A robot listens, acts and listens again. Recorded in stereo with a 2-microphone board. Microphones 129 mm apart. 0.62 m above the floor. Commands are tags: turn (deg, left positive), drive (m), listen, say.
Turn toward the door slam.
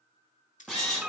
<turn deg="-30"/>
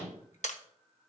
<listen/>
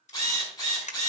<say>I heard a door slam, but can't make it out now. It was about 25° left or 145° right.</say>